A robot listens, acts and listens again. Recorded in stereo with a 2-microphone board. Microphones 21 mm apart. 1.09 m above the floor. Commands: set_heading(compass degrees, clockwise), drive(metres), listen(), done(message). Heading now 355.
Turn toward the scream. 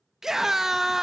set_heading(20)
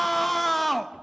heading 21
done("Facing the scream.")